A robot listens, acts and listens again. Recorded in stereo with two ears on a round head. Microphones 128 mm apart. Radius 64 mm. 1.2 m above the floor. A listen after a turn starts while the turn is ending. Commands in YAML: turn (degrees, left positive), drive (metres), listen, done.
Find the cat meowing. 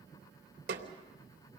listen: true
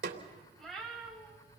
turn: 30
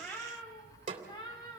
turn: 150
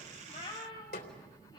turn: 35
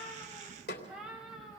done: "Facing the cat meowing."